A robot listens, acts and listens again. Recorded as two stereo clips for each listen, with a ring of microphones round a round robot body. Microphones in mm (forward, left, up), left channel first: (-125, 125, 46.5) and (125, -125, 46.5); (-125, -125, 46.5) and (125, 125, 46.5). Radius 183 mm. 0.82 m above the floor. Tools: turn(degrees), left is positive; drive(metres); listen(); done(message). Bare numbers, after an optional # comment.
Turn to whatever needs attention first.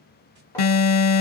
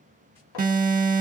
# The alarm: 115° left.
turn(115)
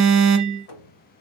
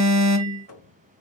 done("Facing the alarm, under 1 m away.")